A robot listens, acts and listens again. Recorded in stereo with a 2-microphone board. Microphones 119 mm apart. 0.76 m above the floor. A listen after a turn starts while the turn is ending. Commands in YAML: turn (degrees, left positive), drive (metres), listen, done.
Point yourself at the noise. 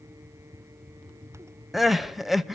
turn: 30
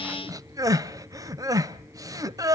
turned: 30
turn: -30
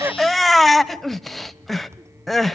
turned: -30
done: "Facing the crying, under 1 m away."